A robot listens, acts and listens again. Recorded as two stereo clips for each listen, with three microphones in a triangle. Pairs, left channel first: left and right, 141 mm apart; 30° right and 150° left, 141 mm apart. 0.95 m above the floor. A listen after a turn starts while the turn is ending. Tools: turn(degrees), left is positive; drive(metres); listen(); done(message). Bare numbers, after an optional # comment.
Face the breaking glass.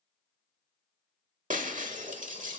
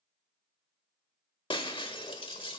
# The breaking glass: 80° right.
turn(-80)
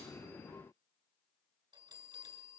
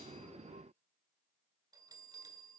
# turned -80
done("Facing where the breaking glass came from. I can't hear it now.")